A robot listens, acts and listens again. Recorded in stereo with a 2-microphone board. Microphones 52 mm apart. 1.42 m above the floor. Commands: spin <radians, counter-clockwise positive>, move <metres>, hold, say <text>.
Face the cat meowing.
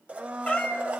spin 0.44
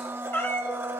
spin 2.18
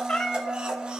spin 0.26
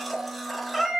say Facing the cat meowing, 1 to 2 m away.